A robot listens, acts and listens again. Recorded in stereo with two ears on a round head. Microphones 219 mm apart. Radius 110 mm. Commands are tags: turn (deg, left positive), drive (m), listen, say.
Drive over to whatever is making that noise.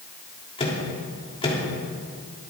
<turn deg="25"/>
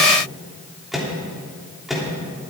<drive m="1.0"/>
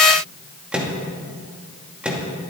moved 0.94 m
<drive m="1.0"/>
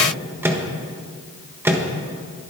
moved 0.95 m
<turn deg="-10"/>
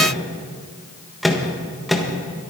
<drive m="1.0"/>
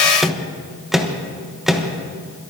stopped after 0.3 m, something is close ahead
<say>Arrived at the microwave, straight ahead.</say>